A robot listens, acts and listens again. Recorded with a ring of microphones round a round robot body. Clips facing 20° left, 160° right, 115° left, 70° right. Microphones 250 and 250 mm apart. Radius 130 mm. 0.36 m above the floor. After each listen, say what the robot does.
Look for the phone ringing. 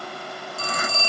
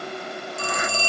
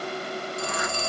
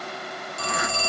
Turn 80° right.
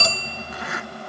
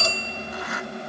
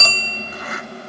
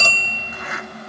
Turn 10° left.
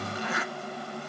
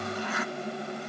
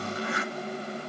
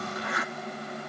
Keep listening.
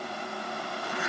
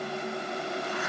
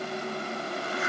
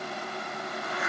Keep listening.
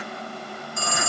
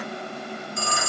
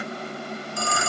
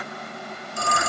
Facing the phone ringing, 1 to 2 m away.